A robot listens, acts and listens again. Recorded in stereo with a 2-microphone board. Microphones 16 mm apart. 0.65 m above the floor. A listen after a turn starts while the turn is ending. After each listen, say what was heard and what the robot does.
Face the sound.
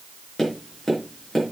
The tapping: about 35° left or 145° left. Turn 35° left.
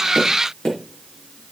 So it is at 105° left. Turn 105° left.
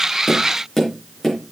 The tapping is now 15° left. Turn 15° left.
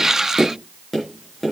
Facing the tapping, over 4 m away.